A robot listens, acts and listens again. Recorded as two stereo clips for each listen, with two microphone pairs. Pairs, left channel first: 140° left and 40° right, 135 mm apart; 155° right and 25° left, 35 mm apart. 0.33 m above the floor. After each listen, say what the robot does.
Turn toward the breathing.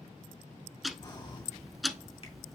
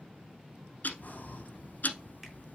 Turn 170° right.
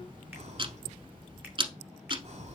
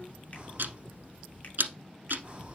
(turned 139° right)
Turn 30° right.
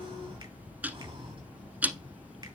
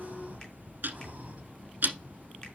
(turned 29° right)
Found it: breathing, straight ahead, 1 to 2 m away.